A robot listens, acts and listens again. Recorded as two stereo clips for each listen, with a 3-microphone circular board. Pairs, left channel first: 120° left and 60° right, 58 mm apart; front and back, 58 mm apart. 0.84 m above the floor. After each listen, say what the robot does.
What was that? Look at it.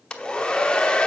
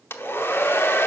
Turn 45° left.
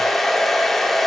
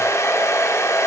Turn 35° left.
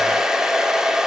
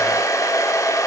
Turn 20° left.
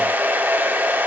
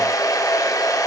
Facing the hair dryer.